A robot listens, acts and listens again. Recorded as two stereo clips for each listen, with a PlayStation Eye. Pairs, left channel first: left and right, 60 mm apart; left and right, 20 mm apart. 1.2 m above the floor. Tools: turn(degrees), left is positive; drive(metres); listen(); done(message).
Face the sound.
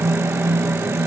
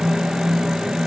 listen()
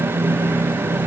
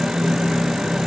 listen()
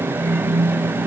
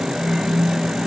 done("I can't make out anything to turn to.")